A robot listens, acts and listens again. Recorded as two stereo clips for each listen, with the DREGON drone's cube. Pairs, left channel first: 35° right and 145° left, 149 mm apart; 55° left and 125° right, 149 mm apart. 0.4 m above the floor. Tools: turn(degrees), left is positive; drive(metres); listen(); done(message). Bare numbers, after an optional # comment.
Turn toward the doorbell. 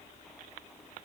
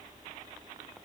listen()
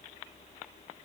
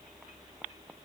listen()
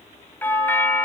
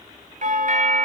# The doorbell: 110° right.
turn(-110)
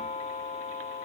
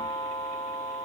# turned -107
done("Facing the doorbell, 2 to 4 m away.")